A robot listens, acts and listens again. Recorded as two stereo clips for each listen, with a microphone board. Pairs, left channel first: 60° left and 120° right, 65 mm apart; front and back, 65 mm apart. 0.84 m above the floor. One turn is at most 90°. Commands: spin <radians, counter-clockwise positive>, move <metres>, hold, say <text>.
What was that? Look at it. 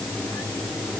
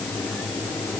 hold
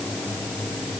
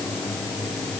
hold
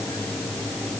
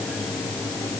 say I can't make out anything.